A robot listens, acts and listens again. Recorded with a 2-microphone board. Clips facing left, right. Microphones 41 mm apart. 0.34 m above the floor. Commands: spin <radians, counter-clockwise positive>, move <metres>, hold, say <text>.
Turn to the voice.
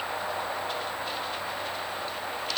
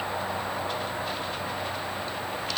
hold
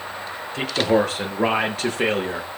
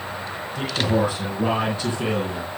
spin 1.57
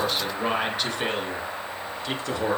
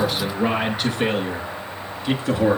spin -0.17
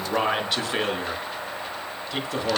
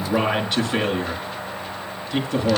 say Found it: a man speaking, straight ahead.